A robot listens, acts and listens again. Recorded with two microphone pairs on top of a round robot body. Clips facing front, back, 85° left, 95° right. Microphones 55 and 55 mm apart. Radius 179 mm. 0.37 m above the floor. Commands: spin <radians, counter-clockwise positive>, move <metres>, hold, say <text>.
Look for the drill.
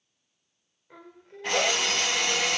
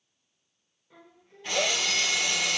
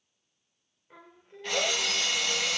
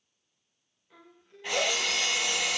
spin -0.35
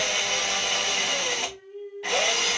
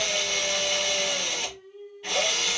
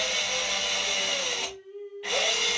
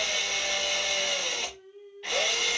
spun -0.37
say Found it: a drill, straight ahead.